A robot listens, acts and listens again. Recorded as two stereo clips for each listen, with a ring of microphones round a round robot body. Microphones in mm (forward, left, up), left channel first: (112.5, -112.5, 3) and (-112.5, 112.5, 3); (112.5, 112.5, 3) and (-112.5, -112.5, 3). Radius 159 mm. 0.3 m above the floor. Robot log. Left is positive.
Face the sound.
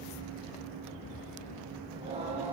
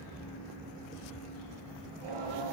note: The singing: 150° right.
cmd yaw -150
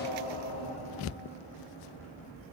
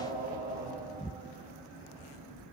note: The singing is now 65° right.
cmd yaw -65
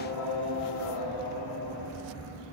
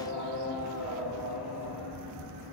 end: Found it: singing, straight ahead.